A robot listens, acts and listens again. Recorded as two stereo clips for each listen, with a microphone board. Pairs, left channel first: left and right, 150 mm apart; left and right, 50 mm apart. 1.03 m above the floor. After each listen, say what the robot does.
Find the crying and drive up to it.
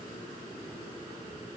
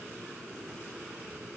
Keep listening.
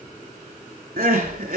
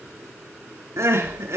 Turn 65° right.
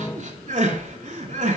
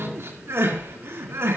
Turn 50° right.
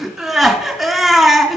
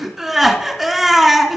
Drive 1.0 m forward.
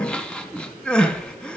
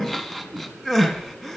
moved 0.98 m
Drive 1.0 m forward.
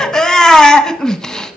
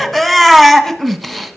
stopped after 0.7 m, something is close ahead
I am next to the crying.